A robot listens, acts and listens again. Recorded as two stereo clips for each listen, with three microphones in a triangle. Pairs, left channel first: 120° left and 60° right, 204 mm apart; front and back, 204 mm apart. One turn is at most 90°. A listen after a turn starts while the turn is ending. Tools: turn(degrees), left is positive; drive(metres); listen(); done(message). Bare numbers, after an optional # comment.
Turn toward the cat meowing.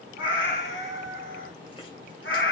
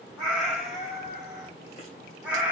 # The cat meowing: 100° left.
turn(90)
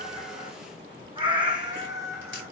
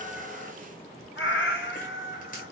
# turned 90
# The cat meowing is now 15° left.
turn(15)
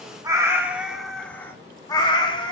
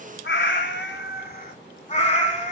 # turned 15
# The cat meowing is now 55° left.
turn(55)
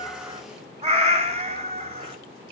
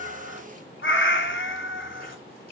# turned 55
done("Facing the cat meowing, 1 to 2 m away.")